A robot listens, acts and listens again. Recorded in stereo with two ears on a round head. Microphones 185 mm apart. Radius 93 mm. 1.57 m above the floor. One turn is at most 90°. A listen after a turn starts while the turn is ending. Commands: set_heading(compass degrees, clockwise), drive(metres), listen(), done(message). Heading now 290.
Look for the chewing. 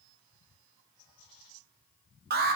listen()
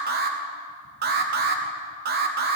listen()
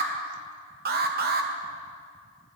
done("I can't make out chewing to turn to.")